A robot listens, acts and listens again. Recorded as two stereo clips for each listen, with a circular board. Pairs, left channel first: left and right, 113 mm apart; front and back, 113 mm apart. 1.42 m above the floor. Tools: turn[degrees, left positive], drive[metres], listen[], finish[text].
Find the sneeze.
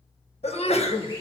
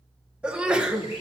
Thought: The sneeze: 100° left.
Action: turn[100]
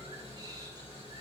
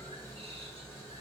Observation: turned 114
Thought: Nothing new. It was at 15° right.
Action: turn[-15]
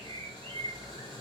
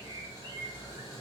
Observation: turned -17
Action: finish[Facing where the sneeze came from. I can't hear it now.]